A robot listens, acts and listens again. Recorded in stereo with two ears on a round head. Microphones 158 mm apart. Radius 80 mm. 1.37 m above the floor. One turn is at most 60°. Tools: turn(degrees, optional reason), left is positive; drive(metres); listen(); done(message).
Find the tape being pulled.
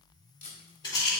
turn(degrees=40, reason="The tape being pulled: about 40° left or 140° left.")
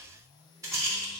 listen()
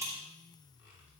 listen()
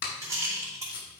turn(degrees=60, reason="So it is at 100° left.")
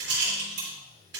turn(degrees=40, reason="Nothing new. It was at 40° left.")
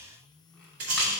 listen()
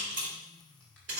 done("I heard tape being pulled from this way, but can't make it out now.")